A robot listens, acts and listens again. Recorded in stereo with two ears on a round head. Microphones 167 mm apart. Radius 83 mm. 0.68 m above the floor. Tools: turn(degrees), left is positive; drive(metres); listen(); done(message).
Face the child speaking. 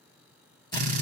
listen()
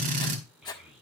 turn(degrees=30)
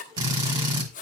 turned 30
listen()
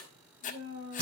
turn(degrees=-30)
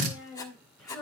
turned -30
done("Facing the child speaking, over 4 m away.")